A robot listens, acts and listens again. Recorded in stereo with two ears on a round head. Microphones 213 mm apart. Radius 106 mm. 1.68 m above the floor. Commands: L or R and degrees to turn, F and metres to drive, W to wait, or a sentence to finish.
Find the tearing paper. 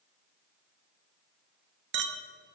W
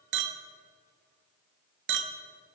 W
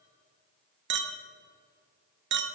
I can't make out tearing paper to turn to.